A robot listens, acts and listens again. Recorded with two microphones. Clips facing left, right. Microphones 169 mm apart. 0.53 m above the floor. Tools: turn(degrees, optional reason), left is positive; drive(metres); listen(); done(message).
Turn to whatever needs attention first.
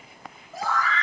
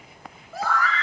turn(degrees=-70, reason="The scream: about 70° right or 110° right.")
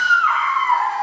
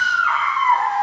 turn(degrees=-40, reason="So it is at 40° right.")
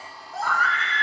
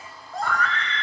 done("Found it: a scream, straight ahead.")